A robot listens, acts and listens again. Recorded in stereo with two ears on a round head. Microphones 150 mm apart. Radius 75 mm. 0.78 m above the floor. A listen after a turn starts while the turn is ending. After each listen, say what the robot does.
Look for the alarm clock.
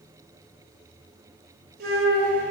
Keep listening.
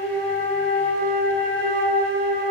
Keep listening.
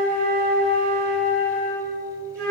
I can't make out an alarm clock, only a flute.